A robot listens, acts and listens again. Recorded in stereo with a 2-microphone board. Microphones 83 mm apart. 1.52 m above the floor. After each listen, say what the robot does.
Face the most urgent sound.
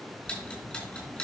Keep listening.
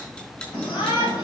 Turn 70° left.
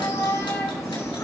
Turn 40° left.
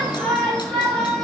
Turn 15° left.
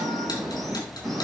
Found it: a shout, straight ahead.